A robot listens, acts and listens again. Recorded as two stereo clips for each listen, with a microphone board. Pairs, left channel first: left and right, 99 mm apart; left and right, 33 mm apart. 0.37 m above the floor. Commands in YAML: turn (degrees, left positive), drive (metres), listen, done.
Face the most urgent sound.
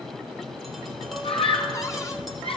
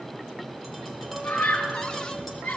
turn: 70
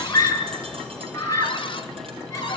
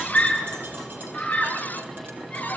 turn: 35
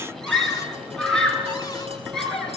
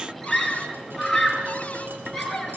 done: "Found it: a scream, straight ahead, over 4 m away."